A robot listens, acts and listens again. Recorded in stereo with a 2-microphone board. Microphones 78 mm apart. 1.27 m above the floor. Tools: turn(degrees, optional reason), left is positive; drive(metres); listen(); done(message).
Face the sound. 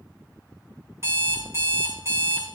turn(degrees=-35, reason="The alarm clock: about 35° right or 145° right.")
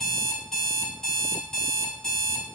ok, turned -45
turn(degrees=10, reason="So it is at 10° left.")
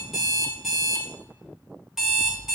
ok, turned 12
done("Facing the alarm clock, 2 to 4 m away.")